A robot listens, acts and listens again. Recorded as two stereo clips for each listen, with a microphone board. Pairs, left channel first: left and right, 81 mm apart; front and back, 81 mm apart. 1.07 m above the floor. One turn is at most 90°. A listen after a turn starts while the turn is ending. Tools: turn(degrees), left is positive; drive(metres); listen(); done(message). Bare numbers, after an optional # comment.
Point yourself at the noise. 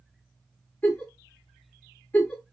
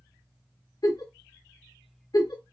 # The giggle: 25° left.
turn(25)
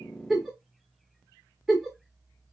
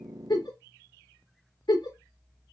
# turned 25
done("Found it: a giggle, straight ahead.")